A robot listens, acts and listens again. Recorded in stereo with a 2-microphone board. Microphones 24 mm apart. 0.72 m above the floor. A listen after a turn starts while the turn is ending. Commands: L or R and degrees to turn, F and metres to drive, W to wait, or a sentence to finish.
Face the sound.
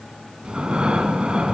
R40
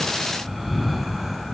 Found it: breathing, straight ahead.